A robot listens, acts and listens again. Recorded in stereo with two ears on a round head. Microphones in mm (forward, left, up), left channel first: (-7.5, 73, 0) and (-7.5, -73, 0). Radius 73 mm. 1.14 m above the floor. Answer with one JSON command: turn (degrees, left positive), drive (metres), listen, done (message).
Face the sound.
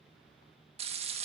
{"turn": -40}
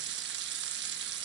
{"turn": -100}
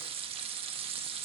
{"turn": -35}
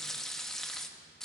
{"done": "Facing the frying, 1 to 2 m away."}